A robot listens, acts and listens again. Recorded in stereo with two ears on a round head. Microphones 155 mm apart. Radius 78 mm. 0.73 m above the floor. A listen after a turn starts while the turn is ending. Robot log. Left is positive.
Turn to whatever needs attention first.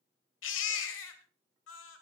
cmd yaw +90
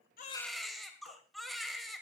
end: Facing the baby crying, 1 to 2 m away.